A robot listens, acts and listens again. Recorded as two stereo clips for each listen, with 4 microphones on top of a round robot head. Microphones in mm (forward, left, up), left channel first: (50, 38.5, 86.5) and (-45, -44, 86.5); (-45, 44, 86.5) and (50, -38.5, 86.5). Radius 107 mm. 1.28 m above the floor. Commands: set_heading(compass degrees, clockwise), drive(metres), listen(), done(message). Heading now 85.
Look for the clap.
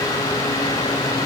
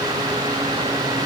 listen()
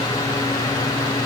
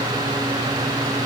listen()
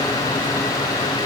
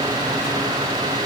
done("I can't make out a clap.")